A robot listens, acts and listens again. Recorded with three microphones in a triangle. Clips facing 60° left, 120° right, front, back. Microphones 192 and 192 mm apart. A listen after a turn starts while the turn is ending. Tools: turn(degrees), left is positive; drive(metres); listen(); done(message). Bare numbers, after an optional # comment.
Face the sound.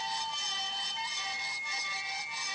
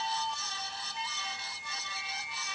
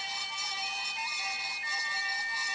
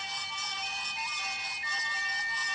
listen()
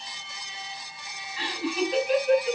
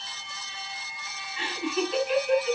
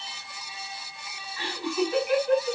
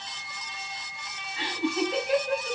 # The laughter: 110° left.
turn(110)
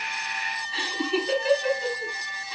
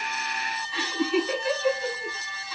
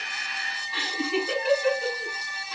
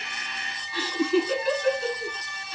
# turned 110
done("Facing the laughter.")